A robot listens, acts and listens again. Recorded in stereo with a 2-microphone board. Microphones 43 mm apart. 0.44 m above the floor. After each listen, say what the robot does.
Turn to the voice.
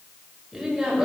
Turn 30° right.
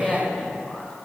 Turn 25° left.
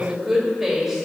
Found it: a woman speaking, straight ahead, 1 to 2 m away.